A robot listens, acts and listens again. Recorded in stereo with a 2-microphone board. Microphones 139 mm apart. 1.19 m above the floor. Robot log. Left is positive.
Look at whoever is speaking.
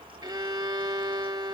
cmd idle
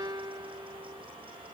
cmd idle
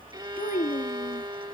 cmd yaw +90
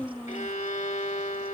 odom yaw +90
note: So it is at 15° left.
cmd yaw +15
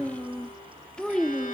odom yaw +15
end: Found it: a child speaking, straight ahead.